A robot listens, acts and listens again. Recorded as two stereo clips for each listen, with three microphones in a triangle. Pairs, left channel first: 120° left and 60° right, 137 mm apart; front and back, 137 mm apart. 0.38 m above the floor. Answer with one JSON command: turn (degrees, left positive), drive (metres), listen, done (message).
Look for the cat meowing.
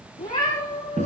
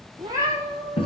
{"turn": 110}
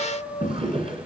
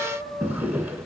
{"turn": 50}
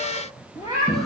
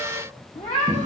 {"done": "Found it: a cat meowing, straight ahead, over 4 m away."}